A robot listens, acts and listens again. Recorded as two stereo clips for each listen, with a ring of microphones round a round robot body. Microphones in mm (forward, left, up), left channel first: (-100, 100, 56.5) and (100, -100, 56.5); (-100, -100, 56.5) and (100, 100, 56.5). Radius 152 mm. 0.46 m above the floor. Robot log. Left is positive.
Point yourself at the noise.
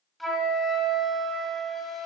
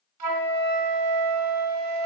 note: The flute: 45° left.
cmd yaw +45
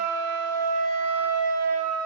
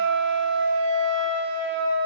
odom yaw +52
end: Facing the flute, 1 to 2 m away.